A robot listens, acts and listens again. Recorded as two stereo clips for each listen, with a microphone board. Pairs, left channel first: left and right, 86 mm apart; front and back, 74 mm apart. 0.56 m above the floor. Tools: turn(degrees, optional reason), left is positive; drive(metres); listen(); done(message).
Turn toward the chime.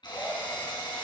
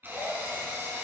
listen()
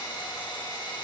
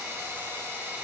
listen()
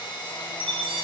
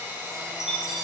turn(degrees=-95, reason="The chime: 95° right.")
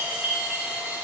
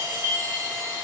turn(degrees=-15, reason="The chime is now 15° right.")
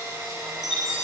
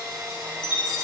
done("Found it: a chime, straight ahead.")